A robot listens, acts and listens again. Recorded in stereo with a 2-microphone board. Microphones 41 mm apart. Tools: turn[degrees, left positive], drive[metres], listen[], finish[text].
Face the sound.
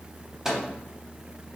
Action: turn[-30]
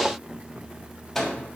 Thought: So it is at 15° left.
Action: turn[15]
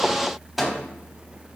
Action: finish[Facing the microwave, under 1 m away.]